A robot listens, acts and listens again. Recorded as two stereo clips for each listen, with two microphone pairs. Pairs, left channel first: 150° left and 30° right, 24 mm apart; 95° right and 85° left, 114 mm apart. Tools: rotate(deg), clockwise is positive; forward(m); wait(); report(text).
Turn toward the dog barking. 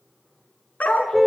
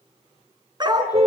rotate(-140)
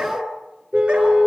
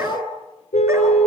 rotate(-20)
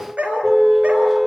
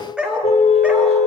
report("Found it: a dog barking, straight ahead.")